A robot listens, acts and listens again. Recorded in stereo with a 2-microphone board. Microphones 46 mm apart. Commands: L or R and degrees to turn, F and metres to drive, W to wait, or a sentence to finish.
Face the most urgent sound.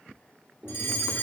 L60
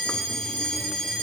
L10
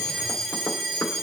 Facing the fire alarm.